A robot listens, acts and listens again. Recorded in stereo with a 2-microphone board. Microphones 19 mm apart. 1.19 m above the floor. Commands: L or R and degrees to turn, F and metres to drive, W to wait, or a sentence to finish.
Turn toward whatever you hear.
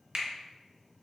R50
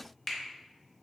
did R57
Found it: a finger snap, straight ahead, 1 to 2 m away.